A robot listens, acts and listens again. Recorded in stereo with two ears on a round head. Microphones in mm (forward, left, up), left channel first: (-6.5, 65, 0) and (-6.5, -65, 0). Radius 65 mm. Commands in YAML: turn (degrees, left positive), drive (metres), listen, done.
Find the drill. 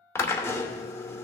turn: 20
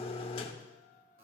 turn: 140
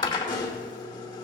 turn: 30
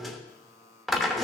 done: "Facing the drill, 1 to 2 m away."